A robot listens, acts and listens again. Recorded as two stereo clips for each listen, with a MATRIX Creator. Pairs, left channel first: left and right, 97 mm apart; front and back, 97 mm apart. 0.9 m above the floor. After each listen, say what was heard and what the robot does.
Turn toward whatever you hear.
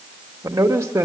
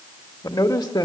The man speaking: 30° right. Turn 30° right.
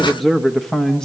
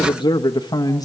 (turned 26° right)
The man speaking is now 15° left. Turn 15° left.
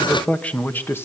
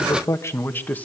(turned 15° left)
The man speaking is now 55° left. Turn 55° left.
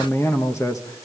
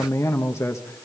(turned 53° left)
The man speaking is now 50° left. Turn 50° left.
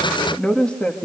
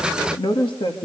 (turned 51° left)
The man speaking is now 15° left. Turn 15° left.
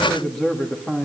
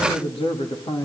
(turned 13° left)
Found it: a man speaking, straight ahead, 1 to 2 m away.